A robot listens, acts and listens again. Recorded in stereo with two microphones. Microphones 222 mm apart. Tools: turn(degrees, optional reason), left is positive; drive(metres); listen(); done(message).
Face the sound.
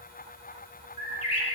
turn(degrees=90)
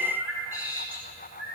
turn(degrees=-10, reason="So it is at 10° right.")
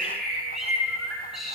done("Found it: a bird, straight ahead.")